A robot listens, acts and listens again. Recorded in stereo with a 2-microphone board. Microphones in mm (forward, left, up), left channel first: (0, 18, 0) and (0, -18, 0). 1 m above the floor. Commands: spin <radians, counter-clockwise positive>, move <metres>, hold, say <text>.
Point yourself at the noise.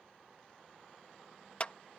spin 0.61
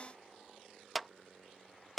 say Facing the clap.